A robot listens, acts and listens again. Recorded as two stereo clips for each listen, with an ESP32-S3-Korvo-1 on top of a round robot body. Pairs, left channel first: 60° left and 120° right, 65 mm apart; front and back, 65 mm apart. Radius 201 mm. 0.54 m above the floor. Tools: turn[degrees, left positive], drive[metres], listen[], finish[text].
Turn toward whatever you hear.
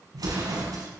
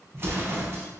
Thought: The explosion: 125° right.
Action: turn[-125]
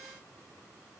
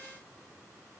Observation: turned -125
Action: finish[Facing where the explosion came from. I can't hear it now.]